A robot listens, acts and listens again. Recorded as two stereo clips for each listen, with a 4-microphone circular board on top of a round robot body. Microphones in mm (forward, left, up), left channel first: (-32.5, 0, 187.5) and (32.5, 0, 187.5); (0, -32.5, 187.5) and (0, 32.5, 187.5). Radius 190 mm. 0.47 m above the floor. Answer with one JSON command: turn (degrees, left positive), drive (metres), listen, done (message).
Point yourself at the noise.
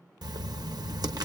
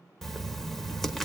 {"done": "Facing the writing."}